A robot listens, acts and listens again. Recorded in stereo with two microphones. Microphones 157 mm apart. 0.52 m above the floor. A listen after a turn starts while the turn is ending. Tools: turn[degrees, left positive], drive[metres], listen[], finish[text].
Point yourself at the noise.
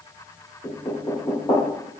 Thought: The knocking: about 25° left or 155° left.
Action: turn[25]
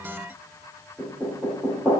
Action: finish[Facing the knocking, 1 to 2 m away.]